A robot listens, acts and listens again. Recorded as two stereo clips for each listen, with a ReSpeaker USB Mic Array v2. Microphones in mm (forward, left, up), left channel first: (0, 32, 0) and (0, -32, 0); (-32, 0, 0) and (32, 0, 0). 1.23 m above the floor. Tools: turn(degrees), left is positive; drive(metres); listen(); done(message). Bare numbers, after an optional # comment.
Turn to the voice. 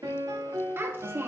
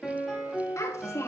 # The child speaking: 140° right.
turn(-140)
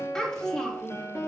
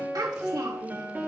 # The child speaking is now 10° left.
turn(10)
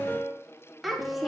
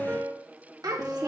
done("Facing the child speaking, 1 to 2 m away.")